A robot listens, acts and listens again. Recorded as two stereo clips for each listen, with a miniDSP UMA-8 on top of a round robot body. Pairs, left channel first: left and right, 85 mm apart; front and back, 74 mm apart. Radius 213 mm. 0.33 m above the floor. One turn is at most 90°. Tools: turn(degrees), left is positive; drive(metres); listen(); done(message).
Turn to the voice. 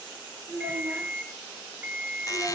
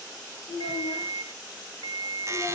turn(degrees=-15)
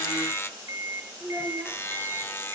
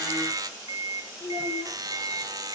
done("Facing the child speaking.")